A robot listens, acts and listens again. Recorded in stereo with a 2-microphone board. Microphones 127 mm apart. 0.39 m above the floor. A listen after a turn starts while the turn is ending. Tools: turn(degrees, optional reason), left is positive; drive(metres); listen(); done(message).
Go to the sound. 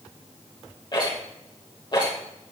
turn(degrees=35, reason="The rattle: about 35° left or 145° left.")
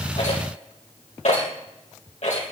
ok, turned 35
turn(degrees=110, reason="So it is at 110° left.")
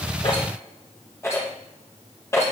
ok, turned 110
turn(degrees=20, reason="The rattle is now 20° left.")
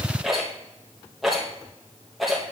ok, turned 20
drive(metres=1.0)
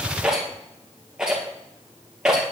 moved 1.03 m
drive(metres=1.0)
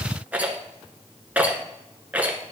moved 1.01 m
turn(degrees=-15, reason="The rattle is now 15° right.")
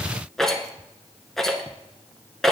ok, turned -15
drive(metres=1.0)
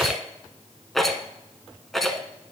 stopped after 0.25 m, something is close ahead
done("Arrived at the rattle, straight ahead.")